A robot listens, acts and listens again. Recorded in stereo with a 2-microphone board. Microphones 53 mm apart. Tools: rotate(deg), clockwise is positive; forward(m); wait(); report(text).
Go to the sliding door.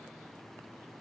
wait()
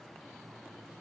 wait()
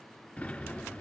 rotate(-20)
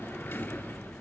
rotate(-140)
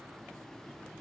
wait()
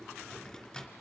rotate(-20)
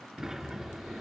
forward(1.0)
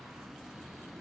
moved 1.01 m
rotate(10)
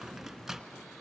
forward(1.0)
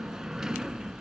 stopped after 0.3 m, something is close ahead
report("I am next to the sliding door.")